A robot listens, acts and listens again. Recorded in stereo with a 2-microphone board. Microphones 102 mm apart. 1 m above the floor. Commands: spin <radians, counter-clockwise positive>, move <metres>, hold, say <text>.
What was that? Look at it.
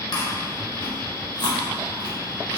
spin 0.79
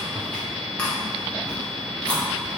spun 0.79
spin 0.17
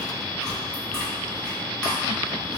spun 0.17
say Facing the chewing, under 1 m away.